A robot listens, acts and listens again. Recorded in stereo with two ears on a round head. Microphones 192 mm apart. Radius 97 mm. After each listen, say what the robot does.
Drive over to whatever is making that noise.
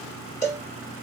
Turn 35° left.
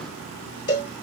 Turn 100° left.
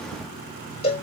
Turn 35° left.
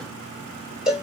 Drive 1.0 m forward.
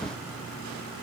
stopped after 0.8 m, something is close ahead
Keep listening.
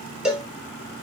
I am next to the cowbell.